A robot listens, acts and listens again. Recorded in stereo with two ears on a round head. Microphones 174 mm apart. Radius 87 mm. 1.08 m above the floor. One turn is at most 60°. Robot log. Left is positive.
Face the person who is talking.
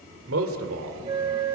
cmd yaw -60
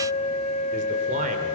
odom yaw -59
note: Nothing new. It was at 30° right.
cmd yaw -30
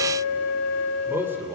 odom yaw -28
note: The man speaking is now 10° right.
cmd yaw -10
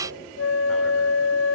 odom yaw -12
cmd idle
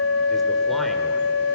cmd idle
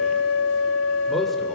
end: I heard a man speaking from this way, but can't make it out now.